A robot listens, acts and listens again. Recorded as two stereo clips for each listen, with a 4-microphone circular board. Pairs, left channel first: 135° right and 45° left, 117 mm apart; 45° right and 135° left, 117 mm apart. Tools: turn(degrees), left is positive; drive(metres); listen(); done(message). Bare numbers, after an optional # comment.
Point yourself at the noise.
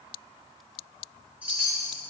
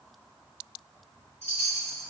# The chime: 30° right.
turn(-30)
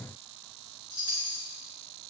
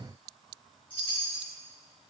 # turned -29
done("Found it: a chime, straight ahead, 2 to 4 m away.")